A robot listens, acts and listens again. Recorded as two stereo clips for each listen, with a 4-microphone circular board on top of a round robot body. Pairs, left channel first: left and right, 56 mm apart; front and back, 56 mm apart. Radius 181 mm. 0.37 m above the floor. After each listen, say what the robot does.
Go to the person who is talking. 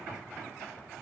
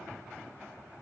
Keep listening.
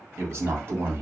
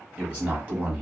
Turn 125° right.
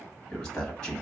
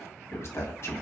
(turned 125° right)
Turn 10° left.
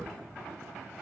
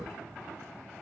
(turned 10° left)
Drive 1.0 m forward.
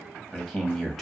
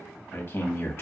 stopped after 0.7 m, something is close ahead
I am next to the man speaking.